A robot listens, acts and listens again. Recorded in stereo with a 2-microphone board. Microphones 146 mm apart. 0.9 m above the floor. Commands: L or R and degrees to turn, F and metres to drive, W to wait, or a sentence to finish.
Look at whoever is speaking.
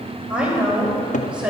R30
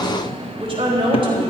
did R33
R145
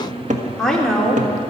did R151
Facing the woman speaking.